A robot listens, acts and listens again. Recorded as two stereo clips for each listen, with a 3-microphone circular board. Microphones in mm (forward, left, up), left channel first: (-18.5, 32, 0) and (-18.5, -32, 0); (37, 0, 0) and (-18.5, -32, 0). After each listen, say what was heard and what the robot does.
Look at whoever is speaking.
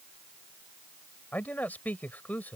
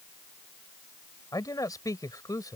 The man speaking: 30° left. Turn 30° left.
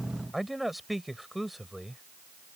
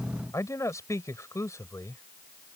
Facing the man speaking.